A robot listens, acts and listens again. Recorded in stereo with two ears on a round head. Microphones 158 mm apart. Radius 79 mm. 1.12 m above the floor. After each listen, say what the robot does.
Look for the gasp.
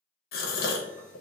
Turn 55° left.
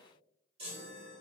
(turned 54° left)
Keep listening.
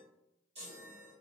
I heard a gasp, but can't make it out now. It was about 5° left or 70° left.